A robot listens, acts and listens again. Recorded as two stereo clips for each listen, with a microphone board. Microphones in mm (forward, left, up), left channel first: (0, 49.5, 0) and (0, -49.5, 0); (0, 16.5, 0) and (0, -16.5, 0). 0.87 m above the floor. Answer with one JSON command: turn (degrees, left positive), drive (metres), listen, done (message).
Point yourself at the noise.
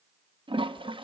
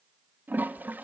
{"turn": -60}
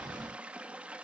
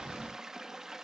{"turn": -15}
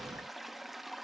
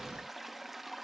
{"done": "Found it: a toilet flushing, straight ahead."}